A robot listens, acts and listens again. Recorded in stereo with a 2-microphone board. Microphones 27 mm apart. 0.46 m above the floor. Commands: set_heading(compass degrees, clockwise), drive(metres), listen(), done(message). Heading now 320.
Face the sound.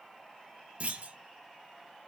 set_heading(20)
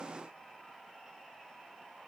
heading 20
listen()
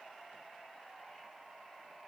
done("I heard a clunk, but can't make it out now. It was about straight ahead or 60° right.")